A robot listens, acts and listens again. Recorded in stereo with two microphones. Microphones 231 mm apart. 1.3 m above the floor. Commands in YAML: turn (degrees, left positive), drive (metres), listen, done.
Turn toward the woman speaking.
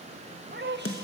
turn: -50
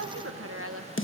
turn: -80
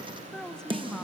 done: "Found it: a woman speaking, straight ahead, 1 to 2 m away."